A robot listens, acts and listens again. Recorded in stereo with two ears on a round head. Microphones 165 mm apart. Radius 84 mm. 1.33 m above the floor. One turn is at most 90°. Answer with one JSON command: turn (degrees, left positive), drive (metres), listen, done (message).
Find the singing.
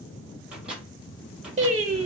{"turn": -30}
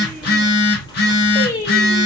{"turn": 20}
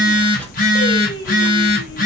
{"turn": 20}
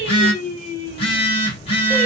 {"turn": 10}
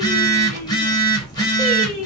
{"done": "Facing the singing."}